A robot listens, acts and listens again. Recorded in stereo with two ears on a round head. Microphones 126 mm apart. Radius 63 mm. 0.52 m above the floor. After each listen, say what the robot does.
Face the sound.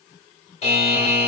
Turn 50° left.
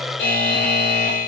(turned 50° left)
Turn 75° left.
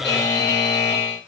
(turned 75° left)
Turn 30° left.
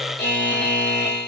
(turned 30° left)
Found it: a buzzer, straight ahead, 1 to 2 m away.